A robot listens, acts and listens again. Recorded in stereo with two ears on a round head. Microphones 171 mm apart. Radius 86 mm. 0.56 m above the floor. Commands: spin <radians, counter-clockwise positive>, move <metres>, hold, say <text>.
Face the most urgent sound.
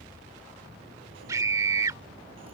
spin -0.35
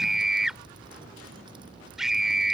say Found it: a scream, straight ahead.